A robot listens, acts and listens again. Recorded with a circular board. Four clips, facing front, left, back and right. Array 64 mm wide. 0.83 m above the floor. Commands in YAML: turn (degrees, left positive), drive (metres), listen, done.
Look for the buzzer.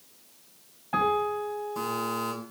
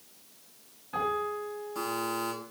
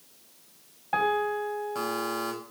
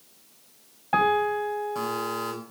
turn: -160
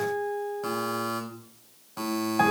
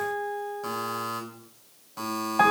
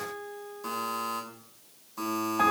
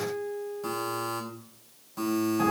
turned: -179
turn: 20
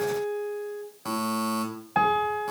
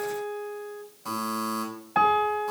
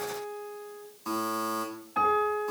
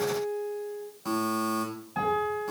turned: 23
done: "Facing the buzzer."